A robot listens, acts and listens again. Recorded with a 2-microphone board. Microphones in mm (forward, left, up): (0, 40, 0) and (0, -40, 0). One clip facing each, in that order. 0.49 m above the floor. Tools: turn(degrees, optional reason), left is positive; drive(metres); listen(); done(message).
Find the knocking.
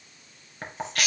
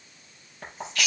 turn(degrees=90)
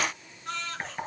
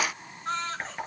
done("Found it: knocking, straight ahead, over 4 m away.")